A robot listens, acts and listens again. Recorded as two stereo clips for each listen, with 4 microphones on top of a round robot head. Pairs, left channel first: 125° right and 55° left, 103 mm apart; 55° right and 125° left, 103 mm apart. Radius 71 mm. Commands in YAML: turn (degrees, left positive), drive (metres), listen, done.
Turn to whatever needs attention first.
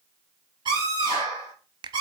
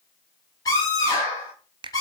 done: "Found it: a scream, straight ahead."